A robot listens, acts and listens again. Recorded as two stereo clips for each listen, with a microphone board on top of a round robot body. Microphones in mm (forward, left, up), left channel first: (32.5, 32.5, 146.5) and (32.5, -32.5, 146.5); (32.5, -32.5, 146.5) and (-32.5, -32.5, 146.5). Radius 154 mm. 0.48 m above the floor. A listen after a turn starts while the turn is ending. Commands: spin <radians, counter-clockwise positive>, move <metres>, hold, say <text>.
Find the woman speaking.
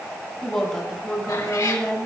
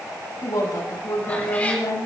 spin 0.17
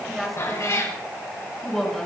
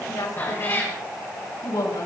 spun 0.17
say Found it: a woman speaking, straight ahead, over 4 m away.